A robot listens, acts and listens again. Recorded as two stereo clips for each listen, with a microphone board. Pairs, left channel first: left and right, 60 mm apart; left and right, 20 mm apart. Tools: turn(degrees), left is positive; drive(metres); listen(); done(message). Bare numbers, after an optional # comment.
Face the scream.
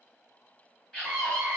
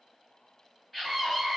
# The scream: about 15° left or 165° left.
turn(15)
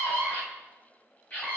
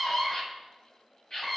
# So it is at 150° left.
turn(150)
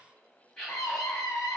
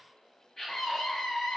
done("Found it: a scream, straight ahead, 2 to 4 m away.")